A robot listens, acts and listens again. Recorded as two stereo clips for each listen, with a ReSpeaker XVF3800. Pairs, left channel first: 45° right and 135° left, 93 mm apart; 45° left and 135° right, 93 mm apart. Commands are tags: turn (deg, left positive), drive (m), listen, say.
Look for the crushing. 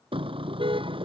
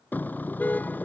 <listen/>
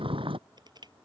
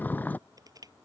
<turn deg="175"/>
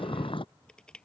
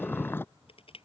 <turn deg="35"/>
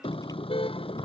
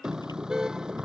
<listen/>
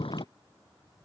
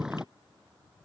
<listen/>
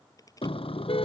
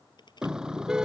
<say>Facing the crushing.</say>